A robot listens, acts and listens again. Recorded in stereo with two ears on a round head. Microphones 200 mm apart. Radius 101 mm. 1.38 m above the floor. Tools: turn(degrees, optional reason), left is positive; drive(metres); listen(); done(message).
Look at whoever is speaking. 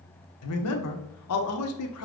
turn(degrees=90)
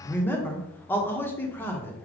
turn(degrees=10, reason="So it is at 10° left.")
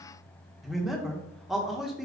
done("Facing the man speaking.")